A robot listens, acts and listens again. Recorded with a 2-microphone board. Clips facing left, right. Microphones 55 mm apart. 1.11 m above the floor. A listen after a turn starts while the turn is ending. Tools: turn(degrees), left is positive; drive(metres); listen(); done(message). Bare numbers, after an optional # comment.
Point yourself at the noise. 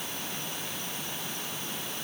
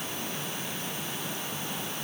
listen()
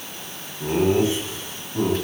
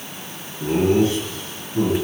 # The laughter: about 20° left or 160° left.
turn(20)
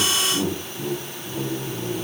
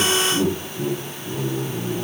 done("Facing the laughter, over 4 m away.")